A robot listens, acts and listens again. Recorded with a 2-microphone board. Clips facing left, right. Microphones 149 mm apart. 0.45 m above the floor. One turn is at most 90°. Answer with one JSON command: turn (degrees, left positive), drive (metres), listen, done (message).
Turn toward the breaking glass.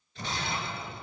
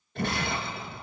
{"turn": -60}
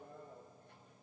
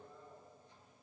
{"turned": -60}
{"listen": true}
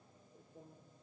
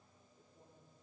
{"done": "I heard breaking glass, but can't make it out now. It was about straight ahead or 60° right."}